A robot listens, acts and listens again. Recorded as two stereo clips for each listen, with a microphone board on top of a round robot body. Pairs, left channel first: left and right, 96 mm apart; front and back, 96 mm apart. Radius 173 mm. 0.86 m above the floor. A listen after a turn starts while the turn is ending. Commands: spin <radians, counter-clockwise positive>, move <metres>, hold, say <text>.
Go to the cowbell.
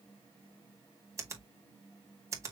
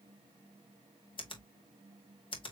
hold
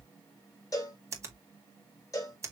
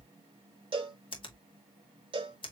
spin 2.62
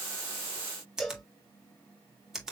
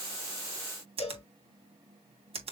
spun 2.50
move 1.0
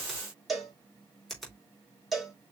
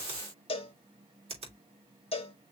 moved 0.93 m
move 1.0
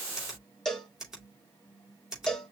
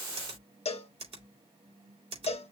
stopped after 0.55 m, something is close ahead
say I am next to the cowbell.